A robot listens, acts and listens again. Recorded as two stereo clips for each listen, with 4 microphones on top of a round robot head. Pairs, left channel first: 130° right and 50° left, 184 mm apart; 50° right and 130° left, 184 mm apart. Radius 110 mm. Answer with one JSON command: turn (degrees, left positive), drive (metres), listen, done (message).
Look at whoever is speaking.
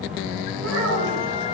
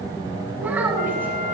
{"turn": 45}
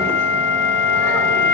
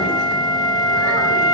{"listen": true}
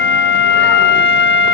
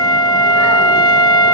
{"listen": true}
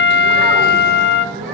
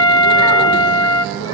{"done": "I heard a child speaking from this way, but can't make it out now."}